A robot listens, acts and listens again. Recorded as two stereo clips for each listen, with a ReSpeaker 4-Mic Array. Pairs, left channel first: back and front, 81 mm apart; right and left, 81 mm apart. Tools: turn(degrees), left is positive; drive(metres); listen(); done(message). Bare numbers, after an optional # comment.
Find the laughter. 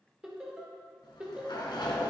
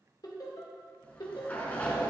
# The laughter: 70° right.
turn(-70)
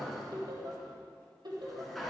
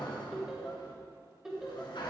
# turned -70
# The laughter is now 10° left.
turn(10)
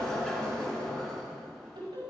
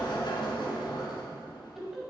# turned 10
done("Found it: laughter, straight ahead, over 4 m away.")